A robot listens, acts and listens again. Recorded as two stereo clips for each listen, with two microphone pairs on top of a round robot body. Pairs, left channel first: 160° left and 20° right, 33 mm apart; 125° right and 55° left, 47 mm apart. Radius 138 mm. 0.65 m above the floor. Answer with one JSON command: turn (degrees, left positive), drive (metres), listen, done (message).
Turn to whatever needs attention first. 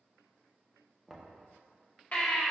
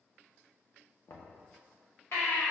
{"turn": -150}
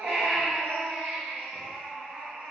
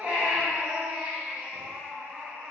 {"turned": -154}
{"done": "Facing the baby crying, 1 to 2 m away."}